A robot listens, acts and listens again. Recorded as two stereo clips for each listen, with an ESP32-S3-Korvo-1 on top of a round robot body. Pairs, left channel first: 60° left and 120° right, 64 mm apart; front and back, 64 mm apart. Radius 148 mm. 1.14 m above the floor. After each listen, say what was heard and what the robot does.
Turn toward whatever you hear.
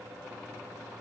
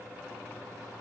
Keep listening.
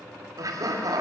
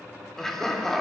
The laughter: 85° right. Turn 85° right.
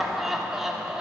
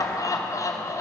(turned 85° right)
The laughter is now 40° right. Turn 40° right.
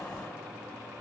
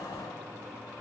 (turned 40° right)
Keep listening.
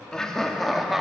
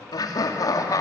The laughter is now 35° right. Turn 35° right.
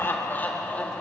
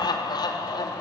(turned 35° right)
The laughter is now 15° right. Turn 15° right.
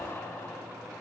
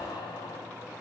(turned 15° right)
Facing the laughter, 2 to 4 m away.